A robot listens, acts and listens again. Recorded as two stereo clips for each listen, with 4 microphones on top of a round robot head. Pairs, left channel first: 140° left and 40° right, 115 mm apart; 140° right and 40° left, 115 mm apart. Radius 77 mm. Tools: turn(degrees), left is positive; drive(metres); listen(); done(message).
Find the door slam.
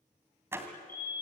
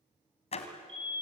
turn(degrees=-110)
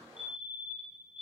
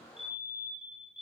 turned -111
done("Facing where the door slam came from. I can't hear it now.")